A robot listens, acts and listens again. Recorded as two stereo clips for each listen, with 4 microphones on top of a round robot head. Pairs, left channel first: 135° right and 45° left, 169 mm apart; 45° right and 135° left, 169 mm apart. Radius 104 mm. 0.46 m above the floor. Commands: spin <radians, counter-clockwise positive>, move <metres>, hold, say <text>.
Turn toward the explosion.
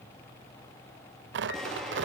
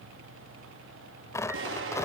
spin 2.36
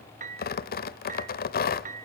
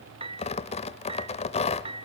say I heard an explosion from this way, but can't make it out now.